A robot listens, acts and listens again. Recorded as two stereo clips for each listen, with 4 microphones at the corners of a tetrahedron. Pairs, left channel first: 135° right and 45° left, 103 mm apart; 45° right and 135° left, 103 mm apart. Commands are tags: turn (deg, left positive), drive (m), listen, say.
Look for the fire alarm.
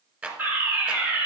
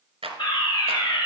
<turn deg="-25"/>
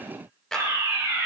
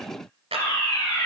<say>Facing the fire alarm, 2 to 4 m away.</say>